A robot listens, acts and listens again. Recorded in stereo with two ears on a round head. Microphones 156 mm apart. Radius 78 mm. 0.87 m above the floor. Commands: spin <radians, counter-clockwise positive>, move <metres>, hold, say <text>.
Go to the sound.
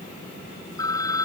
spin 0.35
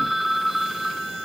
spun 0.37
move 1.0
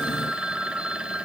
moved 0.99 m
move 1.0
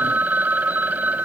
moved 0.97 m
spin -0.17
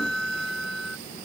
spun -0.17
move 1.0
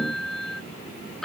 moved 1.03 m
move 1.0
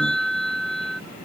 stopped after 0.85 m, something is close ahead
say I am next to the phone ringing.